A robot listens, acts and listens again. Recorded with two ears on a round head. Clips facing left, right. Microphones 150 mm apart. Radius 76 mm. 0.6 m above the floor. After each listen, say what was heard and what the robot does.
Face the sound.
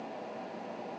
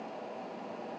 Keep listening.
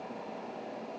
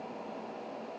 Keep listening.
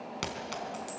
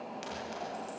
Turn 90° left.
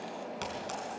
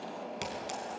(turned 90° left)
So it is at 15° right. Turn 15° right.
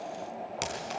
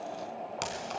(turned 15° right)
Found it: a clink, straight ahead.